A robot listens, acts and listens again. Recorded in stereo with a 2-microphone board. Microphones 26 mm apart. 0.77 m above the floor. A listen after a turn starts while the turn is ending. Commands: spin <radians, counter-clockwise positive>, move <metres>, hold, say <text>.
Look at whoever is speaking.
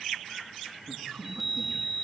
spin -1.05
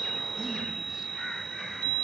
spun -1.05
hold
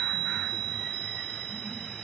hold
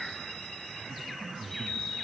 spin -0.26
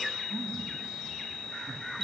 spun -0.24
hold
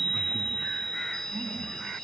hold
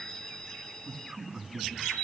say Found it: a man speaking, straight ahead, over 4 m away.